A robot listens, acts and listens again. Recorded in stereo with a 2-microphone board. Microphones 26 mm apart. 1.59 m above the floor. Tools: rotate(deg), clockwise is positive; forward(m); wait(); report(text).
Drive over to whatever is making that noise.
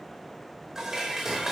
rotate(20)
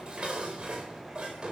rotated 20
rotate(140)
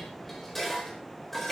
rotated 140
forward(1.0)
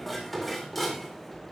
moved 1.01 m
forward(1.0)
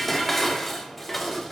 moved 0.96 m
forward(1.0)
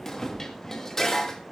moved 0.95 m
rotate(-20)
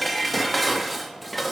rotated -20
forward(1.0)
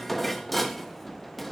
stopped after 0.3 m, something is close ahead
report("I am next to the dishes clattering.")